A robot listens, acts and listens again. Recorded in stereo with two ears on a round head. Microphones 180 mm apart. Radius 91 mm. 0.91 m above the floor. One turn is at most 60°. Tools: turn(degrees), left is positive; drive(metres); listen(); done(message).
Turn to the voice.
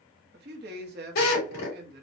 turn(degrees=-50)
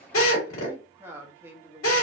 turn(degrees=-15)
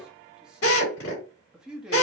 done("Facing the man speaking.")